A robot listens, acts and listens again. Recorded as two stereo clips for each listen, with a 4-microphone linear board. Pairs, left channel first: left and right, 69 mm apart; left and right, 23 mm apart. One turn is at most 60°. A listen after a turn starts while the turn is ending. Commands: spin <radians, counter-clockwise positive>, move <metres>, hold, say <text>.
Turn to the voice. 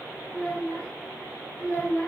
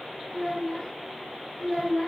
spin 0.35
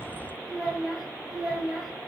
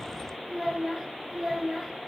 say Facing the child speaking, 2 to 4 m away.